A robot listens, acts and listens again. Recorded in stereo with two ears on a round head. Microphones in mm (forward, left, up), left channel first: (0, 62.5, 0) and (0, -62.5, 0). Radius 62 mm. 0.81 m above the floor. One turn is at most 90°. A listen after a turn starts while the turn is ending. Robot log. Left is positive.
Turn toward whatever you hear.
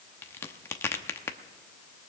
note: The crack: about 15° left or 165° left.
cmd yaw +15
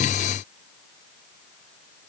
cmd idle
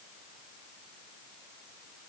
end: I heard a crack, but can't make it out now. It was about straight ahead or 150° left.